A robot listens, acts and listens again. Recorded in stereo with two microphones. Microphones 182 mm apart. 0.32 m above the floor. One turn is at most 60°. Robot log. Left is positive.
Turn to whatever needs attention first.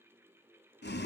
cmd idle
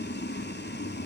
cmd idle
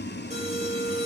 note: The alarm: about 35° right or 145° right.
cmd yaw -35
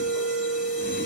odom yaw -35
end: Found it: an alarm, straight ahead, over 4 m away.